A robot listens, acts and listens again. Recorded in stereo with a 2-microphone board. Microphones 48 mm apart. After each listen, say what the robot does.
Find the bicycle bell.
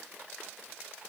Keep listening.
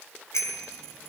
Turn 90° left.
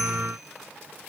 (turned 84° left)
Keep listening.
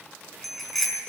Facing the bicycle bell.